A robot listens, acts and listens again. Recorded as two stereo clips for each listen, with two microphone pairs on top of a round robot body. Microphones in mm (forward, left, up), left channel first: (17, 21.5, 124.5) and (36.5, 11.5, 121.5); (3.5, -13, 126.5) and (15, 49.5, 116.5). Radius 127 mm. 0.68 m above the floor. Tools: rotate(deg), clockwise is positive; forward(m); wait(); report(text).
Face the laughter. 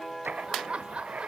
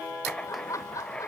rotate(60)
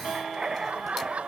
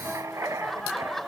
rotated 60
rotate(15)
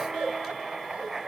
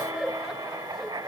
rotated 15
report("Found it: laughter, straight ahead.")